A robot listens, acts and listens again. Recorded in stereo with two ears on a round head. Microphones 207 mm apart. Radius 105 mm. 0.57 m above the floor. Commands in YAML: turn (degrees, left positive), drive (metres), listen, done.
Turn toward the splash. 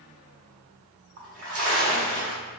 turn: -50
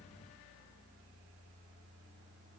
listen: true
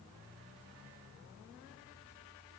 done: "I heard a splash, but can't make it out now. It was about straight ahead or 80° right."